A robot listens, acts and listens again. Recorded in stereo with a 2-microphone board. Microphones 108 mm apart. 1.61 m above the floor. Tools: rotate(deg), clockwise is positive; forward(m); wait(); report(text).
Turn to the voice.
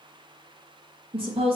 rotate(60)
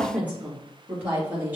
rotate(15)
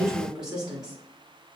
rotate(10)
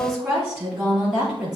report("Facing the woman speaking.")